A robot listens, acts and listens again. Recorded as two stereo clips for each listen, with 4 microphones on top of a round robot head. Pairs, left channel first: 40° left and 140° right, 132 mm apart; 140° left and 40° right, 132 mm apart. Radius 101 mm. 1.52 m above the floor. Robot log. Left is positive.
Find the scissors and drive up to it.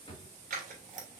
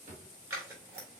note: The scissors: 110° right.
cmd yaw -110
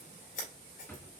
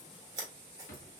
note: The scissors is now 20° left.
cmd yaw +20
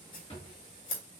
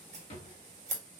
cmd fwd 1.0
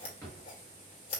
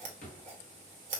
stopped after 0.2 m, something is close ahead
end: Something is in my way. I am facing the scissors but have not reached it.